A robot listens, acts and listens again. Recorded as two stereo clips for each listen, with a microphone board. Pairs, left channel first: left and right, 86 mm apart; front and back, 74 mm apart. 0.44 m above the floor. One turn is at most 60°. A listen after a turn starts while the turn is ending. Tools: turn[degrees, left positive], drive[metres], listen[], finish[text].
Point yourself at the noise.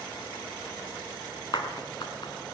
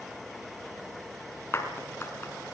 Thought: The clap: 60° left.
Action: turn[60]
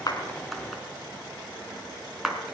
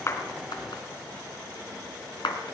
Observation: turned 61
Action: finish[Facing the clap.]